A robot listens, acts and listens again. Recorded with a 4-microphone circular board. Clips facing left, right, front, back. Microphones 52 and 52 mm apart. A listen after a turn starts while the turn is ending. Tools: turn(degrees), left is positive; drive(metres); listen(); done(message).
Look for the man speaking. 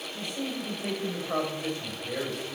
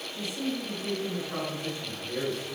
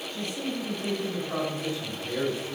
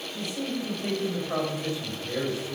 turn(degrees=105)
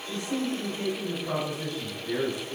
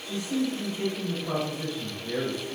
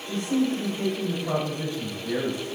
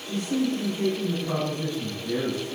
turn(degrees=-10)
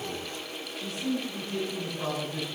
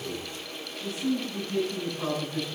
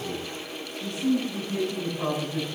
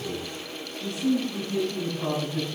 done("Found it: a man speaking, straight ahead, over 4 m away.")